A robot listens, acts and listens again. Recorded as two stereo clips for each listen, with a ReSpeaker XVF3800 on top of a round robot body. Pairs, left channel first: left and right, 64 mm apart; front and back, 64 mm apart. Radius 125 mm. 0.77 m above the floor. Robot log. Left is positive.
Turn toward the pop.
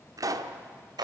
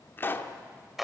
note: The pop: 60° right.
cmd yaw -60
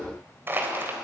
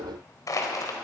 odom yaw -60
end: I heard a pop from this way, but can't make it out now.